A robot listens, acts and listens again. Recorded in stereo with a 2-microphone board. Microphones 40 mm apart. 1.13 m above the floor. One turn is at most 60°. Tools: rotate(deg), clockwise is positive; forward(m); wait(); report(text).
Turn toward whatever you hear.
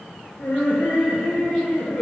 rotate(-60)
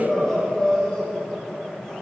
rotate(-20)
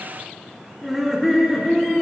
rotate(-10)
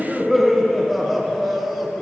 report("Found it: laughter, straight ahead.")